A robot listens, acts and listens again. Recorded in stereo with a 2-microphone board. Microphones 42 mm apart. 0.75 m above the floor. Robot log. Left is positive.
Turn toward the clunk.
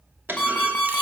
note: The clunk: about 60° right or 120° right.
cmd yaw -60
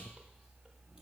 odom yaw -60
cmd idle
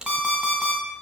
end: I heard a clunk, but can't make it out now. It was about straight ahead or 60° right.